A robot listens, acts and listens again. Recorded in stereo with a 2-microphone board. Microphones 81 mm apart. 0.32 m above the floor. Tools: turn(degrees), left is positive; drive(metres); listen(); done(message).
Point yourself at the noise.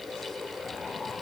listen()
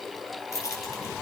turn(degrees=40)
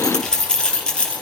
turn(degrees=10)
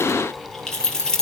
turn(degrees=10)
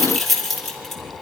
done("Facing the keys jangling, over 4 m away.")